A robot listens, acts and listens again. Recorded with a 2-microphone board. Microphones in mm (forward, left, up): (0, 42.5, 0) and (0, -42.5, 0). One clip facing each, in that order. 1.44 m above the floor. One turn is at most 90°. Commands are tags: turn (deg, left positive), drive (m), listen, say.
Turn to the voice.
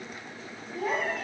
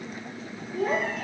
<turn deg="-65"/>
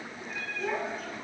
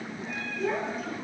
<say>Found it: a child speaking, straight ahead.</say>